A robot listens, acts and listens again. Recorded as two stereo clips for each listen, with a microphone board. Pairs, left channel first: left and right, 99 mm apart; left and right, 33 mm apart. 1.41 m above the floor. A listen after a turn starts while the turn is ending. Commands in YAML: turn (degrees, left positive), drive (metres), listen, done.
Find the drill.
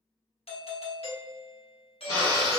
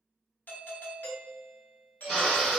turn: 30
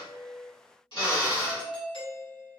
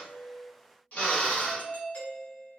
turn: 110
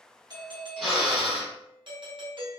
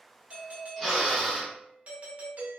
done: "Found it: a drill, straight ahead, 1 to 2 m away."